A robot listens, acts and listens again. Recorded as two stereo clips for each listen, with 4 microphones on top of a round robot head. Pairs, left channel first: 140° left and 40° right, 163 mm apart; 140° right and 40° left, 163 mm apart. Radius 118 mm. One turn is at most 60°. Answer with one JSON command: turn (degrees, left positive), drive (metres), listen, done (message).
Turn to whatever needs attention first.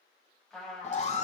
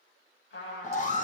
{"turn": -60}
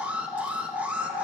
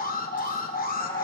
{"turn": -60}
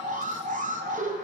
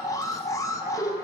{"turn": -60}
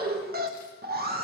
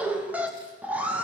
{"turn": -40}
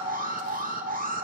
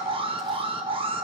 {"turn": -15}
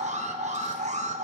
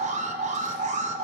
{"done": "Found it: an alarm, straight ahead."}